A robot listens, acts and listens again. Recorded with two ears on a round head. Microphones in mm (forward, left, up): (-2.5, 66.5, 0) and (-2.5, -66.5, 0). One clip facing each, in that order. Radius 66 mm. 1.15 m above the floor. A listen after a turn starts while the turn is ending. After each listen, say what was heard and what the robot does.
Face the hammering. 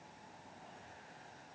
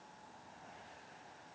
Keep listening.
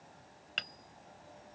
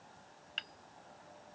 The hammering: about 65° left or 115° left. Turn 65° left.
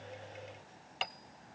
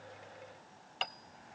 Found it: hammering, straight ahead.